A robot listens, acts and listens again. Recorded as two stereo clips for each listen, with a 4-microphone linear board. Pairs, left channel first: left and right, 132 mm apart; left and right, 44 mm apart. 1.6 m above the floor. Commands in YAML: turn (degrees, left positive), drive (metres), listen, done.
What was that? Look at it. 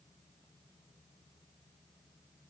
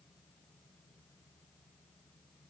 listen: true
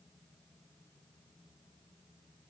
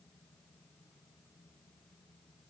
listen: true
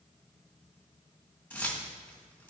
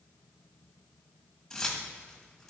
turn: 30
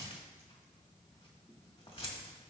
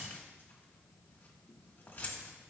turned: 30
turn: 135
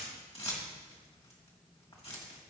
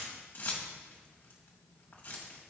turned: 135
turn: 50
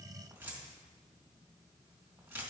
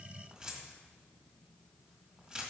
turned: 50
turn: -15
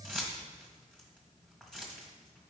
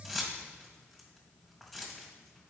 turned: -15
done: "Facing the keys jangling."